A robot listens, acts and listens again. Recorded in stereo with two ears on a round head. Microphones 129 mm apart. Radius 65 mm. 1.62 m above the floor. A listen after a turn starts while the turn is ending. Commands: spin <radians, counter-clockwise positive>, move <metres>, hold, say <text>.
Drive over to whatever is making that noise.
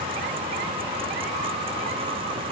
hold
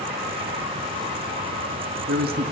spin -1.22
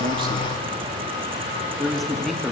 move 1.0
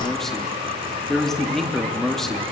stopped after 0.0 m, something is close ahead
say Blocked. The man speaking is further on, straight ahead.